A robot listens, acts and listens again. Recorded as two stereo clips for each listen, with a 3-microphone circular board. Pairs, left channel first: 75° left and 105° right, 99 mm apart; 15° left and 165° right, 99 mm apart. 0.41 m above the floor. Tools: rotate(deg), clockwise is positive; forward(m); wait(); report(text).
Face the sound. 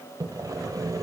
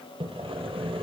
rotate(155)
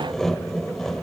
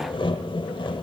rotate(10)
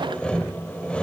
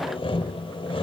report("Found it: sawing, straight ahead, under 1 m away.")